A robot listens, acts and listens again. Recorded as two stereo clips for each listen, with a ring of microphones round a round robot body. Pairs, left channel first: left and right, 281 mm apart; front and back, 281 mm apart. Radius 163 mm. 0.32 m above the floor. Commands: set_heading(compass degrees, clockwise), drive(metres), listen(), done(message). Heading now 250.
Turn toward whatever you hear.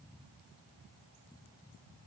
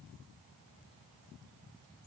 listen()
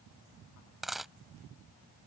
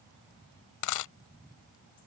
done("Found it: a dropped coin, straight ahead.")